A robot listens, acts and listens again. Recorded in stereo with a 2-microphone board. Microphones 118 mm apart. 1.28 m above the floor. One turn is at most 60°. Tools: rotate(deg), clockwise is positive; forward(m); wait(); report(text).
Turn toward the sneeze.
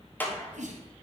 rotate(60)
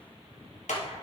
rotate(30)
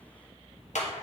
report("Facing where the sneeze came from. I can't hear it now.")